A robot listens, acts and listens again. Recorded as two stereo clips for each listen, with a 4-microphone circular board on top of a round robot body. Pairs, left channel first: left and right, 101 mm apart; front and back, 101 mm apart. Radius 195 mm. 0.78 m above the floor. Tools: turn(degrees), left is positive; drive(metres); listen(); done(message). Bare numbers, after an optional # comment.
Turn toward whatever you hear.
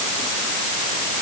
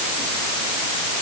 listen()
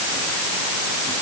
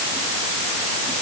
listen()
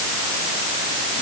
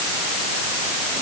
done("I can't make out anything to turn to.")